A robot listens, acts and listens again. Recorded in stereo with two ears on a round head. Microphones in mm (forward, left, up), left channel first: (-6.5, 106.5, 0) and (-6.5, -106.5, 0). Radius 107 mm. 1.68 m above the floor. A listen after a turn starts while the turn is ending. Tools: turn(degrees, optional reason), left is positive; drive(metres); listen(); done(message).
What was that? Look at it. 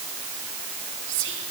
turn(degrees=-55, reason="The whispering: about 55° right or 125° right.")
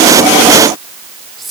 done("Facing the whispering, over 4 m away.")